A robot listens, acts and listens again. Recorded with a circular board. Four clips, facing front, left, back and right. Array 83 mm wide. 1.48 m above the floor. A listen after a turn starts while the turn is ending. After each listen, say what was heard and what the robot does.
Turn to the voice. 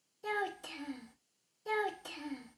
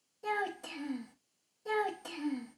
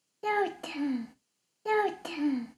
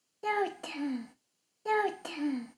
The child speaking: 145° right. Turn 145° right.
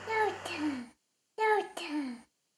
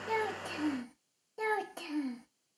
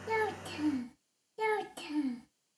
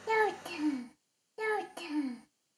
Found it: a child speaking, straight ahead.